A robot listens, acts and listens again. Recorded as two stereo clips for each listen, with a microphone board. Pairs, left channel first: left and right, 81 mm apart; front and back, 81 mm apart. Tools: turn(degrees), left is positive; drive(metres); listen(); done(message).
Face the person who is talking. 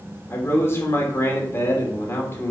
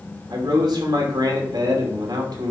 turn(degrees=150)
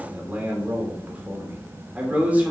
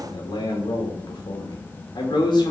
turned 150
turn(degrees=-20)
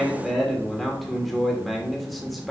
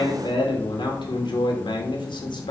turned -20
done("Facing the man speaking.")